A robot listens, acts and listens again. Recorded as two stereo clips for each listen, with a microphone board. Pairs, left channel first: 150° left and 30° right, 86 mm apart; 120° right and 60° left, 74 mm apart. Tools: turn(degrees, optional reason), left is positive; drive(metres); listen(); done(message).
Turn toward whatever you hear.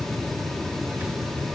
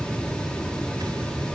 listen()
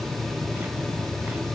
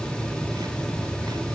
listen()
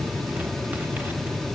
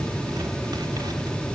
done("I can't make out anything.")